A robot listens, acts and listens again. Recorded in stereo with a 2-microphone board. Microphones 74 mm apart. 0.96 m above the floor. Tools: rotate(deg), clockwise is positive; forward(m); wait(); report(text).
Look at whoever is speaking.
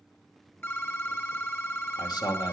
rotate(-90)
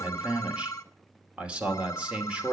rotate(15)
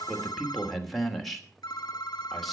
report("Found it: a man speaking, straight ahead, 2 to 4 m away.")